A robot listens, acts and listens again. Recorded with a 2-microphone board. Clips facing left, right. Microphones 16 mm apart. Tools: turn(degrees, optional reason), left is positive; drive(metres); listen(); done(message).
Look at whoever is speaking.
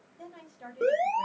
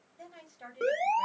turn(degrees=-55, reason="The woman speaking: about 55° right or 125° right.")
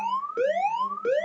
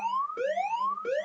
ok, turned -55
listen()
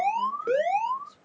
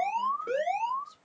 turn(degrees=-20, reason="So it is at 20° right.")
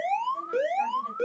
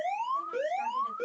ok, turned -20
listen()
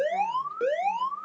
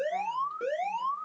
listen()
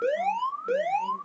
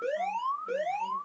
done("Facing where the woman speaking came from. I can't hear it now.")